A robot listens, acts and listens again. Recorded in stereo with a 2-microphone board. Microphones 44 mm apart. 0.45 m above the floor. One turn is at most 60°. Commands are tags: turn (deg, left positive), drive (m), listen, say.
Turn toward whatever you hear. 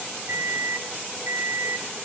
<turn deg="-60"/>
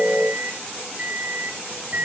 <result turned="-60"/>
<turn deg="-40"/>
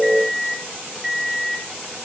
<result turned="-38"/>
<say>Facing the microwave.</say>